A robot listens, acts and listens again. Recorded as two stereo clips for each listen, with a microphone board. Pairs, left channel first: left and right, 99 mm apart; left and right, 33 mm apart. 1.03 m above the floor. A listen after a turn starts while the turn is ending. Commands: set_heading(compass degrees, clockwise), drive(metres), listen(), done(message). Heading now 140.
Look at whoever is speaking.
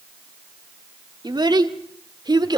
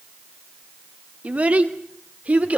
set_heading(185)
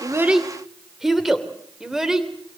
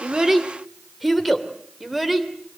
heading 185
done("Facing the child speaking.")